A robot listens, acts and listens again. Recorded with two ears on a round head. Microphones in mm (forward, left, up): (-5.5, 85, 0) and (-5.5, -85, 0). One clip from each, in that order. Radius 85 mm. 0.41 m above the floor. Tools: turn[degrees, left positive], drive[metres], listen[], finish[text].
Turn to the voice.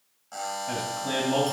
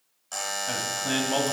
Thought: The man speaking: about 30° right or 150° right.
Action: turn[-30]
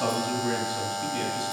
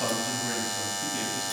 Action: finish[Found it: a man speaking, straight ahead, 2 to 4 m away.]